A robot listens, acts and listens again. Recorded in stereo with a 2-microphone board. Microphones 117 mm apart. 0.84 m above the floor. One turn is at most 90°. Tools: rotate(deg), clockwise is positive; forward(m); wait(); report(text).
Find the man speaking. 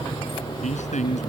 rotate(-90)
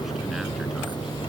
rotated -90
wait()
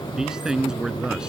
report("Facing the man speaking.")